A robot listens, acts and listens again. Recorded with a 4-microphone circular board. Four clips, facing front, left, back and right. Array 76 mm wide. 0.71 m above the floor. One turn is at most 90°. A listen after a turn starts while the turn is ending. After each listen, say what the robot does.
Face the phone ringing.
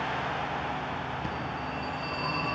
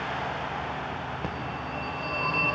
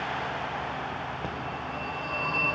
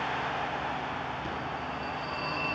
Turn 90° left.
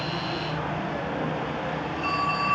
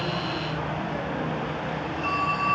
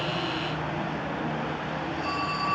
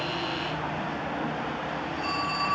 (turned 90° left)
Turn 40° left.
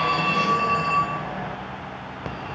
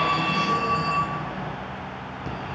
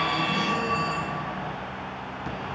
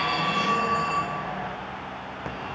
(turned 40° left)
Turn 20° right.
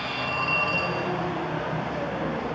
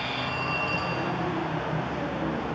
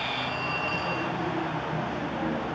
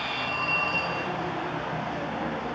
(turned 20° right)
Found it: a phone ringing, straight ahead, 2 to 4 m away.